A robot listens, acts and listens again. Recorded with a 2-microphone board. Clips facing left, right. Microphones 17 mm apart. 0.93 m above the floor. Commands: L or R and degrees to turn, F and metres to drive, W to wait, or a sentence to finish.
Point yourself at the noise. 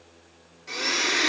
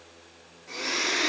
L35
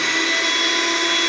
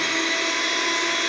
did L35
L115
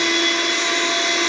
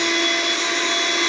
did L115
L20
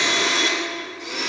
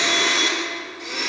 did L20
Found it: a blender, straight ahead, 1 to 2 m away.